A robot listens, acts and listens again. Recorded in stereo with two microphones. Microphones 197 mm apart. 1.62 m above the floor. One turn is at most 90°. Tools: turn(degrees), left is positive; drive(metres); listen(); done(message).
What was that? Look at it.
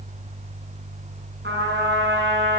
turn(degrees=-70)
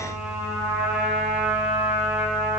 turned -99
done("Facing the trumpet.")